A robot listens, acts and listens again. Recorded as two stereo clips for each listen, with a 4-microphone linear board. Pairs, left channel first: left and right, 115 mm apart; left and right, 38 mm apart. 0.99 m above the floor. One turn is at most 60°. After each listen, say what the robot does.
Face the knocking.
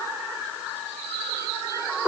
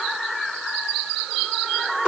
Keep listening.
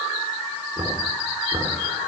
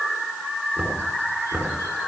Turn 30° right.
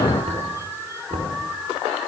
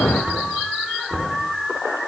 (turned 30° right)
Turn 60° right.
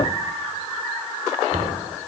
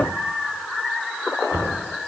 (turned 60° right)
Turn 60° right.
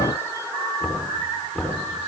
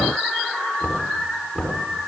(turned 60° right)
Found it: knocking, straight ahead, over 4 m away.